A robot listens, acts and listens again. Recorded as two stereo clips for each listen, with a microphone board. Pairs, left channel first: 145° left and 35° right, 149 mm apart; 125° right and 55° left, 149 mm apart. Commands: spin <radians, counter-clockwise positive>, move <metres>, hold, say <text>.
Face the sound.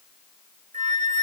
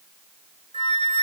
spin -1.22
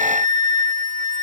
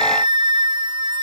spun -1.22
say Found it: a flute, straight ahead.